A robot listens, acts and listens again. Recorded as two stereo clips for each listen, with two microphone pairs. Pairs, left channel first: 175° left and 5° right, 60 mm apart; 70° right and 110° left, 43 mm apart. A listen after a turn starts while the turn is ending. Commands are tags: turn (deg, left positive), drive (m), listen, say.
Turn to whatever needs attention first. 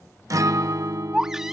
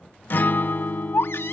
<turn deg="-85"/>
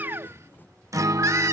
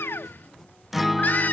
<turn deg="-30"/>
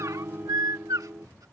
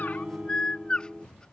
<say>Found it: a baby crying, straight ahead.</say>